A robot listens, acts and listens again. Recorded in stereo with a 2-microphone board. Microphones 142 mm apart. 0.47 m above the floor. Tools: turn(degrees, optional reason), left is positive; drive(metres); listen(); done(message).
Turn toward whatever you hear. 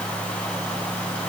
listen()
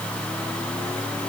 listen()
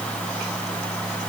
done("I can't make out anything.")